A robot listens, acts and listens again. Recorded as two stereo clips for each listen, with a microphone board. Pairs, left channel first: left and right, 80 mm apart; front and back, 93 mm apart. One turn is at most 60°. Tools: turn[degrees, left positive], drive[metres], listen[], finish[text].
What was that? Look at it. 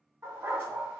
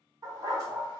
Thought: The dog barking: 145° right.
Action: turn[-60]
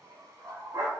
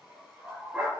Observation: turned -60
Thought: The dog barking is now 105° right.
Action: turn[-60]
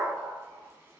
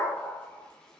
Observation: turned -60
Thought: The dog barking is now 55° right.
Action: turn[-55]
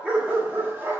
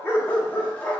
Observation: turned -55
Thought: The dog barking is now 60° right.
Action: turn[-60]
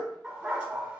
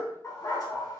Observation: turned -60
Thought: The dog barking is now 25° right.
Action: turn[-25]
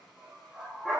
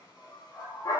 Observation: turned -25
Thought: The dog barking is now 10° right.
Action: turn[-10]
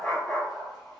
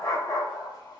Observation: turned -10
Action: finish[Facing the dog barking.]